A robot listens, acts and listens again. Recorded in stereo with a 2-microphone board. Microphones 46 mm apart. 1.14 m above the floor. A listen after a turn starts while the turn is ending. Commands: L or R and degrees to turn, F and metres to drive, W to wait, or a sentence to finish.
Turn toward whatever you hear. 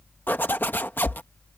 L45
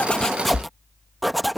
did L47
Facing the zipper.